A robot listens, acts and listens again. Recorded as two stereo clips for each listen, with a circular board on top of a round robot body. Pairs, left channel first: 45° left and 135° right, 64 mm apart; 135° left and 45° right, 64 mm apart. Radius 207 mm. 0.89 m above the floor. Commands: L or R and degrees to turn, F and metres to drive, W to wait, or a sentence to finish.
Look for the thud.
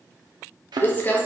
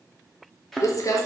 R140
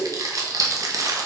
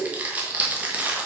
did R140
I heard a thud from this way, but can't make it out now.